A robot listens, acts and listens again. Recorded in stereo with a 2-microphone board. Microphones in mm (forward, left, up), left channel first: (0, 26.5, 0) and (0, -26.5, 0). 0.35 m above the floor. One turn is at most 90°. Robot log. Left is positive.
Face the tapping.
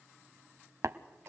note: The tapping: about 65° right or 115° right.
cmd yaw -65
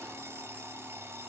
cmd idle
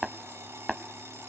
end: Found it: tapping, straight ahead, under 1 m away.